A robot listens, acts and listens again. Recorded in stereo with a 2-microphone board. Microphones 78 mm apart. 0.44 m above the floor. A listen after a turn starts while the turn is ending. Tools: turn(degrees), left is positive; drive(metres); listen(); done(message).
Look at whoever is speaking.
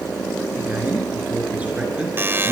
turn(degrees=-20)
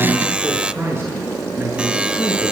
turn(degrees=-35)
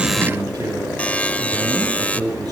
turn(degrees=-120)
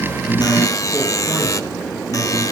turn(degrees=-15)
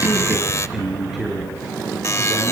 done("Found it: a man speaking, straight ahead, over 4 m away.")